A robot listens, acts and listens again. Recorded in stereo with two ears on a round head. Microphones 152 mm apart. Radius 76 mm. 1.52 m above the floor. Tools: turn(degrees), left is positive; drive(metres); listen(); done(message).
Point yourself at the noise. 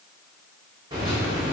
turn(degrees=-25)
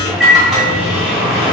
done("Facing the microwave, under 1 m away.")